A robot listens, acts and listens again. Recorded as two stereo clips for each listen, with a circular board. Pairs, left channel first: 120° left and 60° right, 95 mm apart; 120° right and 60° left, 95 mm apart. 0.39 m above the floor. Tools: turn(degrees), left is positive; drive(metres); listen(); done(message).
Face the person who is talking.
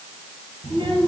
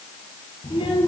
turn(degrees=-100)
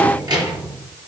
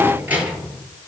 turn(degrees=-15)
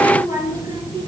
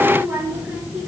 turn(degrees=-15)
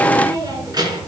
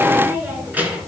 turn(degrees=-15)
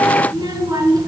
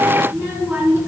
turn(degrees=-10)
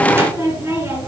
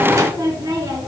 done("Facing the child speaking, 2 to 4 m away.")